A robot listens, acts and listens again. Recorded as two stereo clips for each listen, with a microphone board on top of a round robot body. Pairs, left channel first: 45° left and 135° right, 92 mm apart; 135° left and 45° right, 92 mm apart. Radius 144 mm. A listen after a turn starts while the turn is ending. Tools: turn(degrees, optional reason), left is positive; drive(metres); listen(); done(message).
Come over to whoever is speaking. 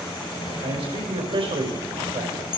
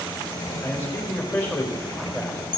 turn(degrees=-155, reason="The man speaking: 155° right.")
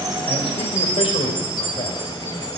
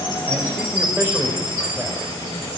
turn(degrees=20, reason="The man speaking is now 20° left.")
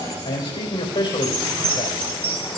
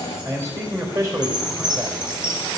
turn(degrees=10, reason="The man speaking is now 10° left.")
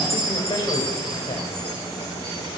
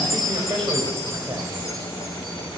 listen()
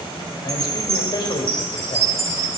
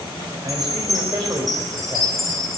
drive(metres=1.0)
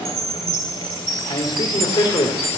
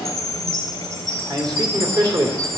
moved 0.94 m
drive(metres=1.0)
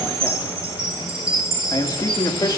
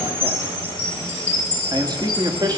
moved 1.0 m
drive(metres=1.0)
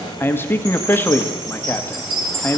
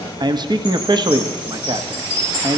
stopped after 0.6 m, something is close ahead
turn(degrees=-20, reason="The man speaking is now 20° right.")
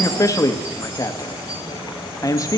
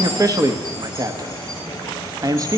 done("Arrived at the man speaking, straight ahead.")